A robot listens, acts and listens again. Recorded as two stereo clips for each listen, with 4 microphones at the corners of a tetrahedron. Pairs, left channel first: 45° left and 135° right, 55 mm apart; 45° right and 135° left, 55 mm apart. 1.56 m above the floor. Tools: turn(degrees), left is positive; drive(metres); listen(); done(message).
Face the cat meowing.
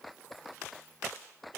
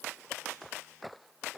listen()
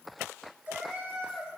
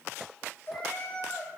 turn(degrees=-90)
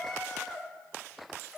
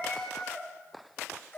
turn(degrees=-60)
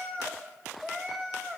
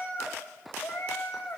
turn(degrees=-50)
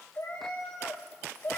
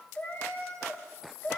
done("Found it: a cat meowing, straight ahead.")